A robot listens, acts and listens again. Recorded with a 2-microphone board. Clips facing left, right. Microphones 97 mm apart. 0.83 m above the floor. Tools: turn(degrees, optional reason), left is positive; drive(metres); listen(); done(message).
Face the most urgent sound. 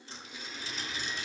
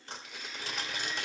listen()
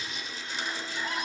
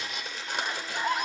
turn(degrees=-50, reason="The scream: about 50° right or 130° right.")
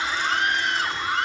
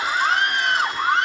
turn(degrees=-75, reason="So it is at 75° right.")
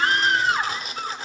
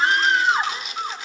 turn(degrees=-25, reason="The scream is now 25° right.")
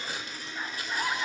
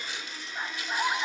turn(degrees=-25, reason="The scream is now 25° right.")
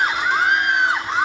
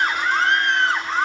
turn(degrees=10, reason="The scream is now 10° left.")
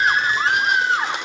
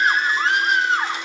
done("Found it: a scream, straight ahead, 2 to 4 m away.")